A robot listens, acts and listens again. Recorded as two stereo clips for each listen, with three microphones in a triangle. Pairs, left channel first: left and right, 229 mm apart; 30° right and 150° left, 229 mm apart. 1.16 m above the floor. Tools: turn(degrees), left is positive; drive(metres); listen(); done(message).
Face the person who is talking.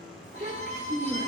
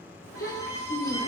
turn(degrees=-40)
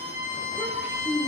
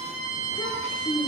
done("Facing the child speaking.")